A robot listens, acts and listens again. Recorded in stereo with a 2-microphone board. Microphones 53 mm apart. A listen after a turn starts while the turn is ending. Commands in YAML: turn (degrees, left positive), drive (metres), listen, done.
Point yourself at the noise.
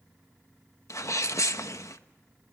turn: 70
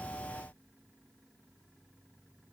listen: true
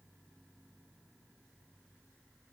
done: "I heard a sneeze, but can't make it out now. It was about straight ahead or 40° left."